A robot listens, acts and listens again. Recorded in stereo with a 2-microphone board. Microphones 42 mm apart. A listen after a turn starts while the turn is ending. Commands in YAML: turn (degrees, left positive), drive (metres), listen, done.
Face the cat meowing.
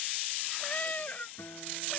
turn: 40
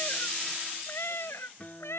turn: 95
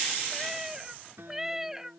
turn: -10
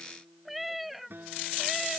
done: "Facing the cat meowing."